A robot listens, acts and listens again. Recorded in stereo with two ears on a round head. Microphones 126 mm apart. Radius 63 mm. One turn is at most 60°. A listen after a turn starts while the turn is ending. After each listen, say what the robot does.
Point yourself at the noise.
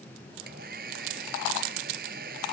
Turn 60° right.
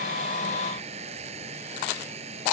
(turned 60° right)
Turn 45° right.
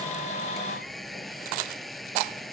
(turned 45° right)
Found it: a hair dryer, straight ahead.